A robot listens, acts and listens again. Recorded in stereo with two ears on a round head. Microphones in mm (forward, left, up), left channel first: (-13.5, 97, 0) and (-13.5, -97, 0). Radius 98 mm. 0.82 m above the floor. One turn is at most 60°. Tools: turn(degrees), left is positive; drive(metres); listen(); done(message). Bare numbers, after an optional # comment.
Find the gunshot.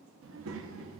listen()
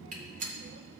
# The gunshot: about 40° right or 140° right.
turn(-40)
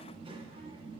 listen()
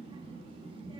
done("I heard a gunshot, but can't make it out now. It was about straight ahead or 100° right.")